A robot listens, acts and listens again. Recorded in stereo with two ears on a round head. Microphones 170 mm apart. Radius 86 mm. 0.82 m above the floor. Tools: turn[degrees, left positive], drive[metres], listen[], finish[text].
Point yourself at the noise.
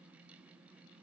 Action: listen[]
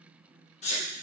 Thought: The sneeze: about 35° left or 145° left.
Action: turn[35]
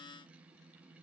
Action: listen[]
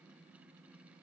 Action: finish[I heard a sneeze, but can't make it out now. It was about straight ahead or 110° left.]